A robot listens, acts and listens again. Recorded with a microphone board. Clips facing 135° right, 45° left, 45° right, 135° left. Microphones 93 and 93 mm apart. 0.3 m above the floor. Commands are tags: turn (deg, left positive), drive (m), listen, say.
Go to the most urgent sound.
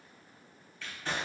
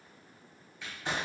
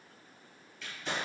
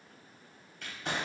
<listen/>
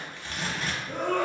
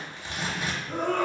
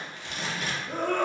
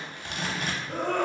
<turn deg="60"/>
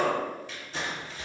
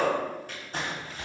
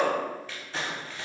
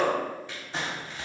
<turn deg="15"/>
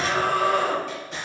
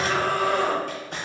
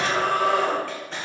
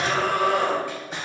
<drive m="1.0"/>
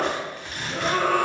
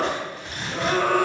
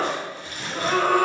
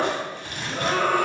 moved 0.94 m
<turn deg="10"/>
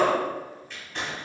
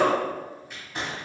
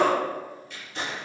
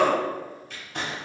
<drive m="1.0"/>
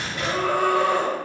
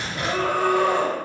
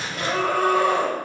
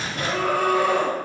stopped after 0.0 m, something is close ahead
<say>I am next to the scream.</say>